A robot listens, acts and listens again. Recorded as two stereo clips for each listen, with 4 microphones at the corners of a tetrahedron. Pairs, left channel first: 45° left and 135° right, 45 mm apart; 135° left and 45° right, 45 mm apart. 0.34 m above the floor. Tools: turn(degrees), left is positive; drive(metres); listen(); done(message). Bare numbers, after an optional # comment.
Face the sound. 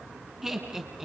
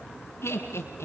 # The laughter: 145° left.
turn(145)
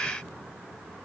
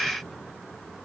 listen()
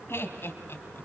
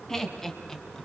# The laughter is now 60° left.
turn(60)
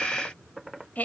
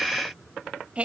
# The laughter is now 10° left.
turn(10)
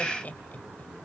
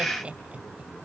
# The laughter is now 10° left.
turn(10)
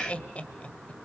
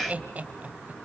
done("Found it: laughter, straight ahead.")